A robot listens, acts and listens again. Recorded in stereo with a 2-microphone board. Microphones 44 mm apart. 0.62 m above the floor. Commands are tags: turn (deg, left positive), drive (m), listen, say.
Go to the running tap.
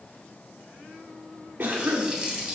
<turn deg="-20"/>
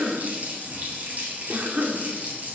<turn deg="-140"/>
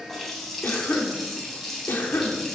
<drive m="1.0"/>
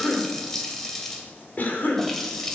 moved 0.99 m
<turn deg="10"/>
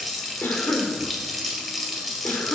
<drive m="1.0"/>
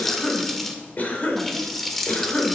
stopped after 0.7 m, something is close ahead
<say>I am next to the running tap.</say>